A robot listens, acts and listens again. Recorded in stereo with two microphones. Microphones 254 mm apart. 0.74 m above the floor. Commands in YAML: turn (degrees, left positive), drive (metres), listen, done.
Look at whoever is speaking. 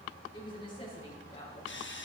turn: 25
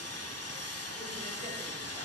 listen: true
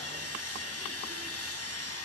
listen: true
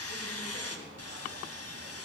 done: "I heard a woman speaking, but can't make it out now. It was about straight ahead or 130° left."